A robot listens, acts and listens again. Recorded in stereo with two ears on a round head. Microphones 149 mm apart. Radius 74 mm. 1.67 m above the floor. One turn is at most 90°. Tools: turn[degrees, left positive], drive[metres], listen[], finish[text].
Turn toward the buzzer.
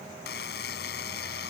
Thought: The buzzer: about 65° left or 115° left.
Action: turn[65]
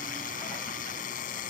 Thought: So it is at 50° left.
Action: turn[50]
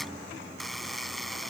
Action: finish[Facing the buzzer.]